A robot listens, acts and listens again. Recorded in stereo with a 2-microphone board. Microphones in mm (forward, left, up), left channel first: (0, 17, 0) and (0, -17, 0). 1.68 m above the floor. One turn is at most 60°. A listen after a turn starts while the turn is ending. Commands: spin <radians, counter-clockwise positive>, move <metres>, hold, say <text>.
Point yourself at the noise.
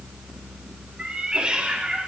spin -0.61
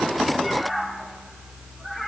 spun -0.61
say Found it: a cat meowing, straight ahead.